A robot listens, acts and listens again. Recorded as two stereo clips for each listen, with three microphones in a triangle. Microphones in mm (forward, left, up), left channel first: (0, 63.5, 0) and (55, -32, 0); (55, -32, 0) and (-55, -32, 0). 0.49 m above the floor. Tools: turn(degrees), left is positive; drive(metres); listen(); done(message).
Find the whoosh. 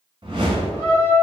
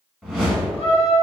turn(degrees=-95)
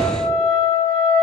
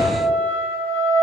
turn(degrees=20)
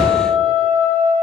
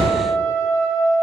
done("Found it: a whoosh, straight ahead, under 1 m away.")